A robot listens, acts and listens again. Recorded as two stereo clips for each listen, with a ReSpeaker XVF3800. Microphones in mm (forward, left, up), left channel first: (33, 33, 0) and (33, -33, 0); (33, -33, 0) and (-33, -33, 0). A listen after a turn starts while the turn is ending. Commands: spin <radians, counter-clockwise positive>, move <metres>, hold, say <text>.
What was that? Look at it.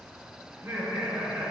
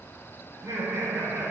spin -2.36
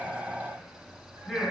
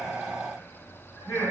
say Found it: laughter, straight ahead, 2 to 4 m away.